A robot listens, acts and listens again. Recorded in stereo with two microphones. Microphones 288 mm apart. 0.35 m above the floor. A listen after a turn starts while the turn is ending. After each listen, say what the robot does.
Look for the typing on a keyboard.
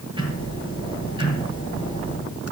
Keep listening.
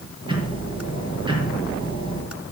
Keep listening.
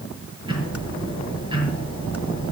I can't make out typing on a keyboard to turn to.